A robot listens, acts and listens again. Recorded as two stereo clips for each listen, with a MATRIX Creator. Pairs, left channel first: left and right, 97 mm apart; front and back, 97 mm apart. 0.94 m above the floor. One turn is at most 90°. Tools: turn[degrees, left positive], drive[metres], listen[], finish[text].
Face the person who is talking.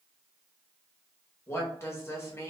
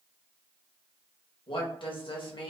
Thought: The woman speaking: 25° left.
Action: turn[25]
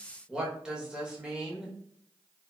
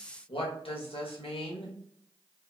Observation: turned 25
Thought: The woman speaking is now 10° right.
Action: turn[-10]
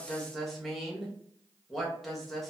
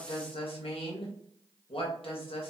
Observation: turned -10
Action: finish[Found it: a woman speaking, straight ahead, under 1 m away.]